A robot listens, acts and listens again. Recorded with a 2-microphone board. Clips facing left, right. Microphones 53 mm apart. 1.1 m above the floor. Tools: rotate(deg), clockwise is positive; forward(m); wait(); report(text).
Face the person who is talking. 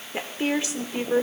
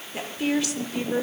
rotate(-25)
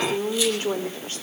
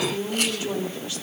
rotate(-135)
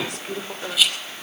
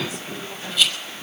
rotate(-80)
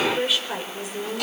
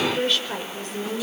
rotate(-10)
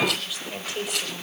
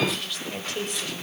report("Found it: a woman speaking, straight ahead.")